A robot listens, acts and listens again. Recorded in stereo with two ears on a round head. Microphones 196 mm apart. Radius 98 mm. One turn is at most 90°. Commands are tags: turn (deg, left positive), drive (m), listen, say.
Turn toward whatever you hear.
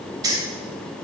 <turn deg="-20"/>
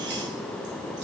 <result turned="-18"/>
<listen/>
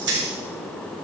<turn deg="-90"/>
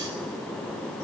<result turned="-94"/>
<turn deg="-30"/>
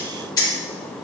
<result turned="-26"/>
<turn deg="20"/>
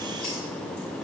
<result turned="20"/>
<listen/>
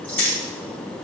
<say>Facing the keys jangling, 2 to 4 m away.</say>